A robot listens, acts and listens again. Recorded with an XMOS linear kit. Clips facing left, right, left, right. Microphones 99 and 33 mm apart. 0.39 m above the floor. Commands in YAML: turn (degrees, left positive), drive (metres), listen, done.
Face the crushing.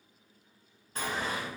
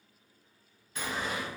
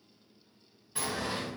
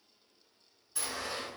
listen: true
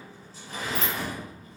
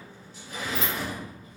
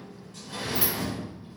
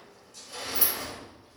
listen: true
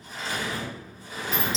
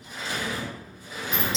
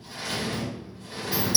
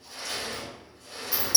done: "I can't make out crushing, only a sliding door."